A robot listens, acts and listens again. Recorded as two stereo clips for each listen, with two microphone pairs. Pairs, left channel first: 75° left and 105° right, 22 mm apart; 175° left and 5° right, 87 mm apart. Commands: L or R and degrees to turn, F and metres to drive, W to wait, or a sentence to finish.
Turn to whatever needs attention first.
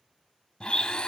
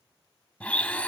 W
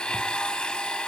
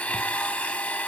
W
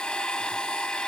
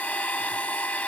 I can't make out anything urgent to turn to.